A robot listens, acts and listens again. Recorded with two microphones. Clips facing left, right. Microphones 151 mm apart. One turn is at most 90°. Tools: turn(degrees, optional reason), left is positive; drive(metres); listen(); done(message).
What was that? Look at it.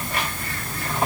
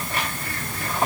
listen()
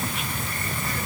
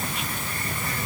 listen()
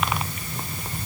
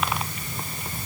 done("I can't make out anything.")